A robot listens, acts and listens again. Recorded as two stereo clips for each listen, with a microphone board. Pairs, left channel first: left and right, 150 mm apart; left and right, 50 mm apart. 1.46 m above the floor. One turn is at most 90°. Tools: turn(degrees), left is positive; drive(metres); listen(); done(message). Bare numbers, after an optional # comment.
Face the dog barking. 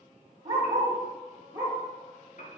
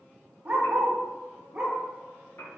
# The dog barking: about 15° right or 165° right.
turn(-15)
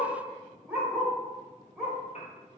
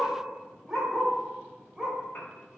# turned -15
turn(30)
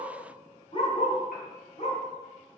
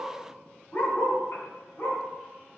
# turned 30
# So it is at 130° left.
turn(90)
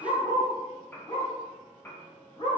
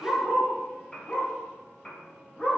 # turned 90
# The dog barking is now 30° left.
turn(30)
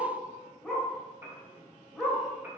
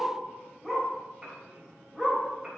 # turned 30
done("Found it: a dog barking, straight ahead, 2 to 4 m away.")